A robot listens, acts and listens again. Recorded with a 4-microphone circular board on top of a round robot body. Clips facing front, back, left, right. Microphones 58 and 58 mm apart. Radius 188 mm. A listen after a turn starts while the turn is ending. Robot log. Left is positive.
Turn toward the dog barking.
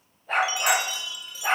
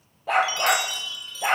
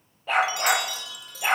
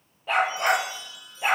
note: The dog barking: 170° right.
cmd yaw -170
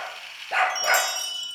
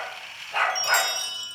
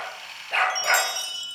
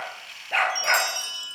end: Facing the dog barking.